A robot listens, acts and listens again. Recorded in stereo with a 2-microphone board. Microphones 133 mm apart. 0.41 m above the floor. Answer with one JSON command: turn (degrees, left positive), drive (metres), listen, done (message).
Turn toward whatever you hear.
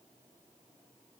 {"listen": true}
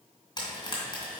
{"turn": 35}
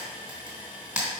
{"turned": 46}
{"done": "Facing the frying."}